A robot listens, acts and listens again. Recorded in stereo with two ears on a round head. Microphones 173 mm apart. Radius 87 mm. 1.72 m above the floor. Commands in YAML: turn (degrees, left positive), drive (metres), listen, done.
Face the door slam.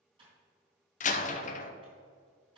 turn: 40
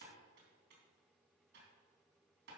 listen: true
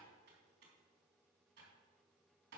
done: "I heard a door slam, but can't make it out now. It was about straight ahead or 100° left."